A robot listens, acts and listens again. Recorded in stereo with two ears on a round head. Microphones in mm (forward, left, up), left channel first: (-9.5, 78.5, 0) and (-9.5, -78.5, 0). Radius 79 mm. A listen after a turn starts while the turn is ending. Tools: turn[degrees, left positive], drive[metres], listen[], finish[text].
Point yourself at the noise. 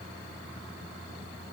Action: listen[]
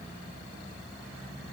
Action: listen[]
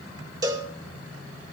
Thought: The cowbell: about 25° right or 155° right.
Action: turn[-25]
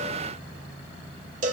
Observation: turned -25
Thought: So it is at 130° right.
Action: turn[-130]
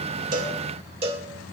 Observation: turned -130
Thought: The cowbell is now 40° right.
Action: turn[-40]
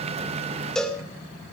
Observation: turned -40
Action: finish[Facing the cowbell, 2 to 4 m away.]